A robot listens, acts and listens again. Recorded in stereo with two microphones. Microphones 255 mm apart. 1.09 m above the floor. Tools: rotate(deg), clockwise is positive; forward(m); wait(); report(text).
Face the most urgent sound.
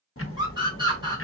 rotate(20)
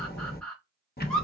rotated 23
report("Facing the scream.")